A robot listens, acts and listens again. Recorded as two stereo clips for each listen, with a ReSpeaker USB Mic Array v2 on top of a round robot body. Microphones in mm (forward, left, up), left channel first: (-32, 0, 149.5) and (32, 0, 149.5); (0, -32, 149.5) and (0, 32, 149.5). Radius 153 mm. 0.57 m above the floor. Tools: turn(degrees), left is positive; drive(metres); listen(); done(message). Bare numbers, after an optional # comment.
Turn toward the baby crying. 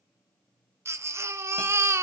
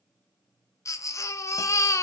# The baby crying: 45° right.
turn(-45)
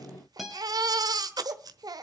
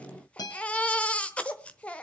# The baby crying is now 15° right.
turn(-15)
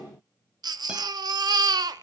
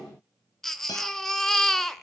done("Facing the baby crying, 1 to 2 m away.")